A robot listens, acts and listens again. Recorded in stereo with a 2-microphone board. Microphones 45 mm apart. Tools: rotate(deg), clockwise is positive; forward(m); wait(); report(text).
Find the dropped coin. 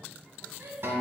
wait()
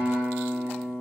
wait()
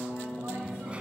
rotate(25)
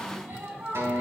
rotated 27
wait()
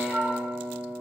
report("I heard a dropped coin, but can't make it out now. It was about straight ahead or 125° right.")